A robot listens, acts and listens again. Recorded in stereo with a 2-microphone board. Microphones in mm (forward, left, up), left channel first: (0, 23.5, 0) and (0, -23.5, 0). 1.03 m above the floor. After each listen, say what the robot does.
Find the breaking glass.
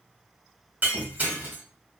Turn 40° right.
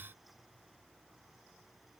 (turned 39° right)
Keep listening.
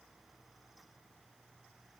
I heard breaking glass, but can't make it out now. It was about straight ahead or 100° right.